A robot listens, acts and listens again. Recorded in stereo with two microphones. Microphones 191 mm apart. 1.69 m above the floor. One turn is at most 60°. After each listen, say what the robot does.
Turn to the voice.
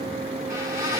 Keep listening.
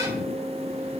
Keep listening.
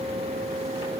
I can't make out anyone speaking to turn to.